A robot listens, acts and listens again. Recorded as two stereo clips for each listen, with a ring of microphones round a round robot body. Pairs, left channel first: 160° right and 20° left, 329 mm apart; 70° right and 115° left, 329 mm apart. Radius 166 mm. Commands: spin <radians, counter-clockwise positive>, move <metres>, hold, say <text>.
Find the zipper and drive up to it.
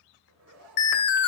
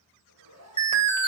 spin 1.31
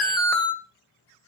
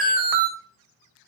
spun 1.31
hold
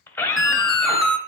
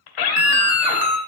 hold
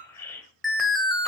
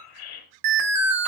say Facing where the zipper came from. I can't hear it now. I did not reach it.